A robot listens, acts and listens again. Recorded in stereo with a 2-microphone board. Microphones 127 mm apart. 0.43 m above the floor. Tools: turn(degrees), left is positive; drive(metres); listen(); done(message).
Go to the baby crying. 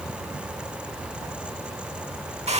listen()
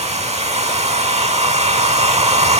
listen()
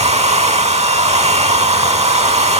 done("I can't make out a baby crying to turn to.")